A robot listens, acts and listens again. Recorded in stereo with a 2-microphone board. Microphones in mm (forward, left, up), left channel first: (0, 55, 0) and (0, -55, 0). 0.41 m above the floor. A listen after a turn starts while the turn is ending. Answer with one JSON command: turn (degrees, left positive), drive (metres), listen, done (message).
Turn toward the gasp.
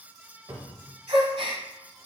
{"turn": -60}
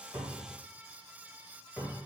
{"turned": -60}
{"listen": true}
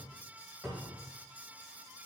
{"done": "I heard a gasp, but can't make it out now. It was about straight ahead or 60° right."}